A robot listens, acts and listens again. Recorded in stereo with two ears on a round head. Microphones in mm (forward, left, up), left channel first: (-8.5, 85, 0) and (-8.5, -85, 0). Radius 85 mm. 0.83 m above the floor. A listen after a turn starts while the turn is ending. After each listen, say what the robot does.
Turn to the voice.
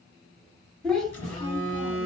Turn 30° left.
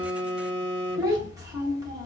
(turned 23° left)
Turn 20° right.
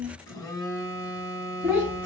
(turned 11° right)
Turn 10° right.
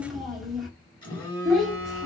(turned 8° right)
Found it: a child speaking, straight ahead, 1 to 2 m away.